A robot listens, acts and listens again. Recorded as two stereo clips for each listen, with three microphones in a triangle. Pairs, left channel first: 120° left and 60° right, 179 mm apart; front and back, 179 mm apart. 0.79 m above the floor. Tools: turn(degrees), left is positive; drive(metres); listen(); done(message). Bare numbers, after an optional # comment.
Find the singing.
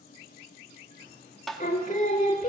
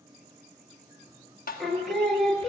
# The singing: 85° left.
turn(85)
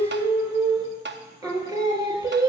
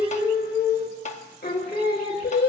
done("Found it: singing, straight ahead.")